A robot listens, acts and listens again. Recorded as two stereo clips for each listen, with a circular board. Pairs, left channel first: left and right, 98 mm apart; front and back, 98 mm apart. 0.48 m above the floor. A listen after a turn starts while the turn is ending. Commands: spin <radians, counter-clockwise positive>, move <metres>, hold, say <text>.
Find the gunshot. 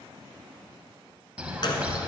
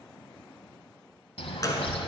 spin 0.96
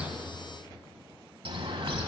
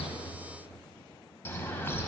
say I heard a gunshot from this way, but can't make it out now.